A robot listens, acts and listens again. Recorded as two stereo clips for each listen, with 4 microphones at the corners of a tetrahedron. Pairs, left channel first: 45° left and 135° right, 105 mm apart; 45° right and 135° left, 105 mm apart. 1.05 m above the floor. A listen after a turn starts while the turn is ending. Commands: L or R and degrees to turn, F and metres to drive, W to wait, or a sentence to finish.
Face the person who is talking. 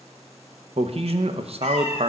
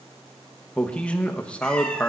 R125
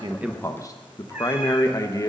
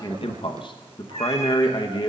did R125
R10
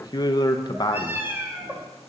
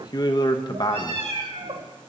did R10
Found it: a man speaking, straight ahead.